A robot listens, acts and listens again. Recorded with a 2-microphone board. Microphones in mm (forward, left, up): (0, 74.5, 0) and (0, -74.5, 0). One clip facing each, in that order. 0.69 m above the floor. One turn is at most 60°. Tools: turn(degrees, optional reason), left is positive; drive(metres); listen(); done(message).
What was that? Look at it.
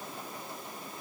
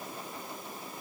listen()
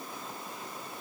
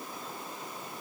listen()
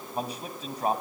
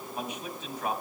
turn(degrees=35, reason="The man speaking: about 35° left or 145° left.")
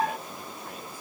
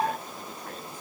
listen()
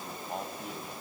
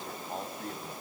turn(degrees=10, reason="So it is at 10° left.")
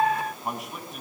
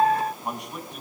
done("Found it: a man speaking, straight ahead.")